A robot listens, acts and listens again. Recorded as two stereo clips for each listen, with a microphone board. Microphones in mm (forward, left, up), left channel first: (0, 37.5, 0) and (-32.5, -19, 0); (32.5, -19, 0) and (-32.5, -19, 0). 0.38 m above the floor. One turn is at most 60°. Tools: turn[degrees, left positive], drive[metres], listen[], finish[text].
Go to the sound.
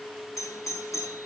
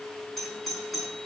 Thought: The doorbell: 85° left.
Action: turn[60]
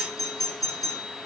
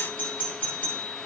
Thought: The doorbell is now 65° left.
Action: turn[60]
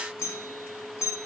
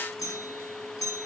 Thought: The doorbell is now 15° left.
Action: turn[15]
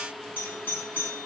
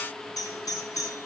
Action: drive[1.0]
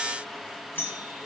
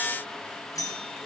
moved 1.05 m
Action: drive[1.0]
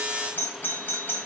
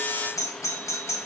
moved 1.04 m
Action: drive[1.0]
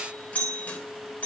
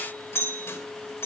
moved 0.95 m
Action: drive[1.0]
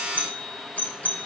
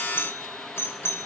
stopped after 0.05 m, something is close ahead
Thought: The doorbell is now 10° left.
Action: turn[10]
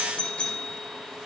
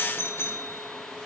Action: finish[I am next to the doorbell.]